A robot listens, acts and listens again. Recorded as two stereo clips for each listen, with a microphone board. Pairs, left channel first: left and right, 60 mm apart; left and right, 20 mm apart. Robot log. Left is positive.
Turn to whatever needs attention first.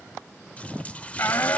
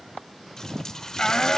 note: The shout: about 45° left or 135° left.
cmd yaw +45
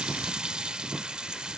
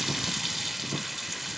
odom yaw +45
cmd idle
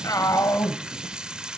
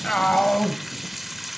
note: So it is at 85° left.
cmd yaw +85
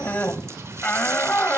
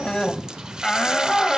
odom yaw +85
note: The shout is now 35° left.
cmd yaw +35
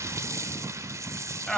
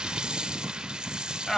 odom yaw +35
note: The shout is now 10° left.
cmd yaw +10
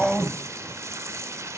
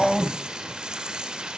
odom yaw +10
end: Found it: a shout, straight ahead, 2 to 4 m away.